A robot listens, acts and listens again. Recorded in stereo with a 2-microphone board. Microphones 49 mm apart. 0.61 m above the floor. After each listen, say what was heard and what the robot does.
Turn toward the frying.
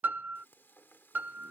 The frying: about 50° left or 130° left. Turn 50° left.
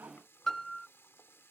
So it is at 75° left. Turn 75° left.
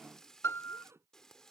The frying is now 15° left. Turn 15° left.
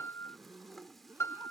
Keep listening.
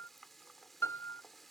Found it: frying, straight ahead.